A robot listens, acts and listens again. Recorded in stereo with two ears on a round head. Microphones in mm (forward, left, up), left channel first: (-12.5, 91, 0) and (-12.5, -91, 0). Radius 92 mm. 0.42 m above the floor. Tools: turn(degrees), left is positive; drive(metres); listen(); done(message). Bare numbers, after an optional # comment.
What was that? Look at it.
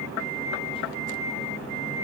listen()
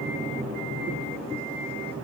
listen()
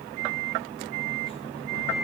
done("I can't make out anything.")